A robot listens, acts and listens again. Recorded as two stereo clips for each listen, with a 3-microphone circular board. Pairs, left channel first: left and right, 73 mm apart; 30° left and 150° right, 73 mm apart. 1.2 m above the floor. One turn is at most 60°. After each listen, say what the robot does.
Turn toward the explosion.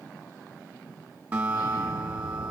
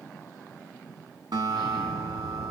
Turn 60° left.
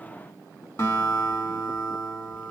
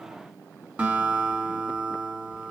Turn 55° left.
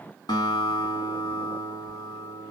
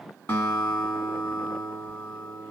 Facing where the explosion came from. I can't hear it now.